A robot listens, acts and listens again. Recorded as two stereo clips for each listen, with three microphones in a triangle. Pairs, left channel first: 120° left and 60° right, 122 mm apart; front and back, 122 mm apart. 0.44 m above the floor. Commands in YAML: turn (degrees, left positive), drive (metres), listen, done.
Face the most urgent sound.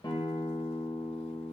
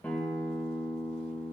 listen: true
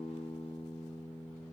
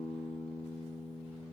listen: true
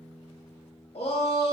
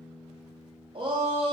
turn: 140
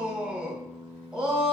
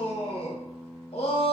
turn: 20
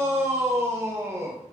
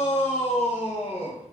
done: "Found it: a shout, straight ahead."